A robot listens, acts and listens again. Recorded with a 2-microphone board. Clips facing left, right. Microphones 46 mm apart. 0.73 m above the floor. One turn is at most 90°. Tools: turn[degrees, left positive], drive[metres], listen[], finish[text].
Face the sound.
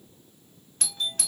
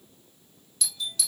Thought: The doorbell: about 55° left or 125° left.
Action: turn[55]
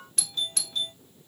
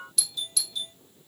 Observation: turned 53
Thought: So it is at 55° left.
Action: turn[55]
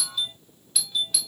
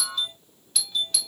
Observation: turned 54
Action: finish[Facing the doorbell.]